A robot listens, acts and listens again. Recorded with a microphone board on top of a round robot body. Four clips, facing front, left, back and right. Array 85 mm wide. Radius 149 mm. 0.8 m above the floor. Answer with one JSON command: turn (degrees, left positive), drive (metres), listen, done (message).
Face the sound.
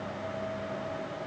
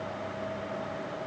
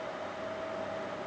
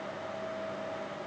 {"listen": true}
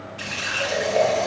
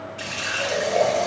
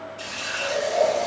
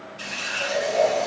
{"turn": 50}
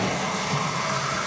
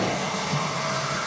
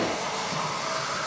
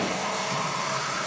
{"turn": 25}
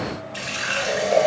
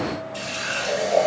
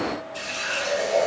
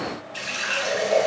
{"turn": -15}
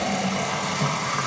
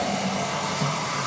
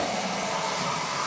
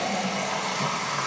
{"done": "Found it: a running tap, straight ahead, 1 to 2 m away."}